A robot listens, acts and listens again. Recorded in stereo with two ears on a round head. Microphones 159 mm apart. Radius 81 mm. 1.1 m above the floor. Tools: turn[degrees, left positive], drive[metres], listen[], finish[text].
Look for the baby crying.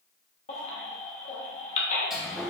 Thought: The baby crying: about 40° left or 140° left.
Action: turn[40]
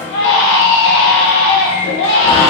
Thought: So it is at 95° left.
Action: turn[95]
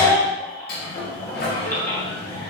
Thought: The baby crying is now 15° left.
Action: turn[15]
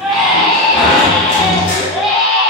Action: finish[Facing the baby crying, under 1 m away.]